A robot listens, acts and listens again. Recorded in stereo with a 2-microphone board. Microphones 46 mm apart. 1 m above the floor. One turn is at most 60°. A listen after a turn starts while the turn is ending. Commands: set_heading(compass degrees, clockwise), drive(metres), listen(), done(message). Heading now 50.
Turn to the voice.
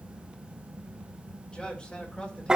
set_heading(30)
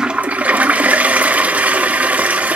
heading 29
listen()
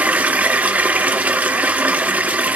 listen()
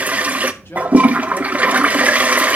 set_heading(329)
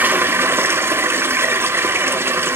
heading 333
set_heading(273)
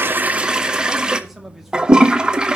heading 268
done("Found it: a man speaking, straight ahead, 2 to 4 m away.")